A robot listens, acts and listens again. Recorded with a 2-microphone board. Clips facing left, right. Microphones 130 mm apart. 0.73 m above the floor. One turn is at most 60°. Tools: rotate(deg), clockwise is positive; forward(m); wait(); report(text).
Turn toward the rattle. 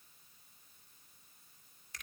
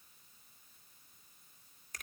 wait()
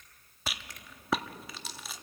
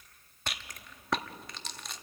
rotate(-30)
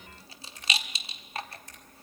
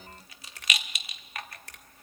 rotate(-60)
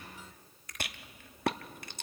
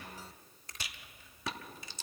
rotate(-60)
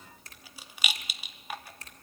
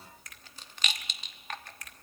rotate(-10)
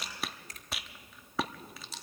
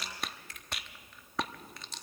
report("Facing the rattle.")